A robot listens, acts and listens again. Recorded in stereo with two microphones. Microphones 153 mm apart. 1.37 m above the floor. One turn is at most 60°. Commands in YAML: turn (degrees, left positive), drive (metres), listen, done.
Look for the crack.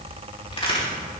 turn: 40
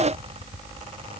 listen: true
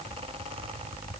done: "I heard a crack, but can't make it out now. It was about straight ahead or 100° left."